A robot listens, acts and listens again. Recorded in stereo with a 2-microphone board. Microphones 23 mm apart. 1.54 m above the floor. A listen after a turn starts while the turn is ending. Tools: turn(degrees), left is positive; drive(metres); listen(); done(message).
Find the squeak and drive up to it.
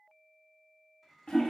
listen()
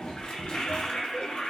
listen()
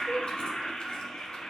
done("I can't make out a squeak, only a toilet flushing.")